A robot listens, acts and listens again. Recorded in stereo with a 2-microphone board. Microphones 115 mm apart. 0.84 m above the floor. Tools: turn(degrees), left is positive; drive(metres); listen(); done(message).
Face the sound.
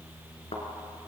turn(degrees=60)
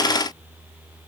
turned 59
listen()
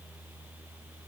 done("I heard a thud, but can't make it out now. It was about straight ahead or 60° left.")